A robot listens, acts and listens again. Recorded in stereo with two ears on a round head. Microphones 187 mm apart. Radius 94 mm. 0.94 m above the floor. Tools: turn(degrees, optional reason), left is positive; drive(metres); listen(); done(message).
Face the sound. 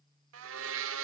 turn(degrees=-70, reason="The blender: about 70° right or 110° right.")
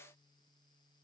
listen()
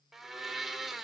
done("Facing the blender.")